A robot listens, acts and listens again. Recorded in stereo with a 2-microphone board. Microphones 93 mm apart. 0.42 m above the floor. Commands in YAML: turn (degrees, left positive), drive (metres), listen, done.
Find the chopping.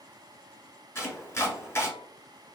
turn: 25
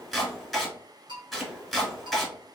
done: "Found it: chopping, straight ahead."